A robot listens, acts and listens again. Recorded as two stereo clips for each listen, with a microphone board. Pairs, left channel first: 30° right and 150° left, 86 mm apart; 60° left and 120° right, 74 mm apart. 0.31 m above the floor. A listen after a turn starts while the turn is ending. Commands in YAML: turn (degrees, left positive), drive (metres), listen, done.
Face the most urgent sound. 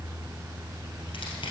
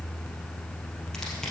listen: true
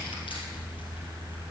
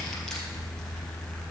listen: true
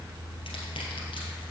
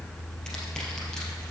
done: "I can't make out anything urgent."